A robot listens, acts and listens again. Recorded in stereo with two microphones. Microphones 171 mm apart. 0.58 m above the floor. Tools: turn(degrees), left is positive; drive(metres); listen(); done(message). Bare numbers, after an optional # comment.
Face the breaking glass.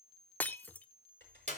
turn(30)
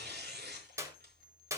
listen()
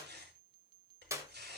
done("I heard breaking glass, but can't make it out now. It was about 20° right or 140° left.")